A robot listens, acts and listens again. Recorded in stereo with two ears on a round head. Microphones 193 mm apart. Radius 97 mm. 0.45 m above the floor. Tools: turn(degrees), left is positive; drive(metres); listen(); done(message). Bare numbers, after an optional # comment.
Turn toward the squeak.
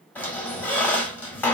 turn(30)
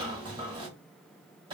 # So it is at 25° right.
turn(-25)
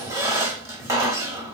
# The squeak is now 15° right.
turn(-15)
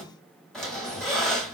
done("Found it: a squeak, straight ahead.")